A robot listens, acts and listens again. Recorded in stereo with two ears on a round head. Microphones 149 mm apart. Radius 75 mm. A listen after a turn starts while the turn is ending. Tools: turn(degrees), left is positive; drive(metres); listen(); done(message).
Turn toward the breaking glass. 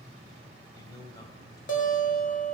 listen()
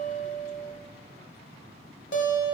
listen()
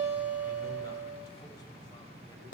done("I can't make out breaking glass, only a guitar and a man speaking.")